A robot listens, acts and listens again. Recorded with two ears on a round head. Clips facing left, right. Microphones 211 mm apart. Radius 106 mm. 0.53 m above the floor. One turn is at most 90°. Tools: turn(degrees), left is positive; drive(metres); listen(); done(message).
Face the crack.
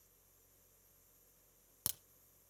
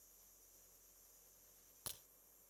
turn(degrees=60)
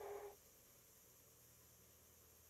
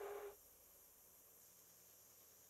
listen()
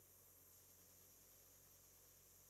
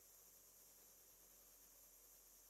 done("I heard a crack, but can't make it out now. It was about straight ahead or 60° left.")